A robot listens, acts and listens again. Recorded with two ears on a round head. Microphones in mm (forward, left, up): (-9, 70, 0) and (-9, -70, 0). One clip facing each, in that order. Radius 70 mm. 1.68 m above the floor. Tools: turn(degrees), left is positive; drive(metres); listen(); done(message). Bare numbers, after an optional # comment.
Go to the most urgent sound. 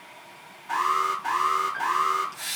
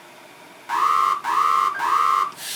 turn(-90)
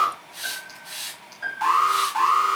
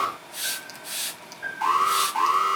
drive(1.0)
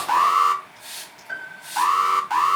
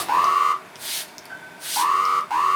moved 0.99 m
drive(1.0)
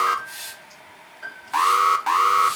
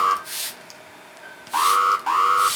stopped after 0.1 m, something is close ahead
done("I am next to the alarm.")